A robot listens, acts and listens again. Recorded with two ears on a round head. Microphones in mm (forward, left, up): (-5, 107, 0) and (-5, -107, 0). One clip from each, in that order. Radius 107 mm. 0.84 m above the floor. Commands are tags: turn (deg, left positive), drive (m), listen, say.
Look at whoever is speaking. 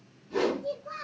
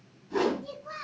<turn deg="-50"/>
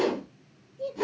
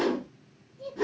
<say>Found it: a child speaking, straight ahead, 1 to 2 m away.</say>